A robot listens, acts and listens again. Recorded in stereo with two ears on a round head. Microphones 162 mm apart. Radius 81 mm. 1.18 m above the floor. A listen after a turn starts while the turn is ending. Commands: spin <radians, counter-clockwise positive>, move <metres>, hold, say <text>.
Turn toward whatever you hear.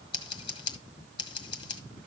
spin 0.44
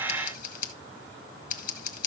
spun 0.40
spin 2.27
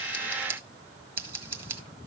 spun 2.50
spin -0.26
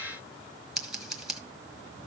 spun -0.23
say Facing the scissors, 1 to 2 m away.